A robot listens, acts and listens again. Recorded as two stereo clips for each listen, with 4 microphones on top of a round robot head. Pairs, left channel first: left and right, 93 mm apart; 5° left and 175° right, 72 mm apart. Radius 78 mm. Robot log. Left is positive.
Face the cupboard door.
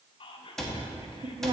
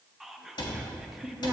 end: Found it: a cupboard door, straight ahead.